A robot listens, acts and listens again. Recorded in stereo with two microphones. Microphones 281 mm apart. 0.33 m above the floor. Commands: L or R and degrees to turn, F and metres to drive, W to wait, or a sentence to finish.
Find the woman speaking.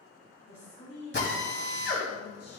L60
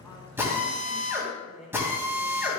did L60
Found it: a woman speaking, straight ahead, 2 to 4 m away.